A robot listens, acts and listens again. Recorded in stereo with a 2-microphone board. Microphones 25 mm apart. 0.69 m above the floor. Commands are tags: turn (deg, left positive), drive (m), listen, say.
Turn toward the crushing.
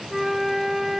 <listen/>
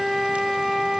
<listen/>
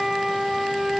<say>I can't make out crushing, only a flute.</say>